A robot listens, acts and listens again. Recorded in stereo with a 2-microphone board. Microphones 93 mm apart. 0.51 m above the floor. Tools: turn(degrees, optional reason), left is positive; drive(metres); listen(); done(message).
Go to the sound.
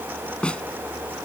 turn(degrees=30)
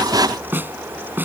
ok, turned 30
turn(degrees=-20, reason="So it is at 20° right.")
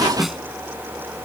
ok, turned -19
drive(metres=1.0)
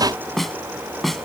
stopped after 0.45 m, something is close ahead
done("Blocked. The snare drum is further on, straight ahead.")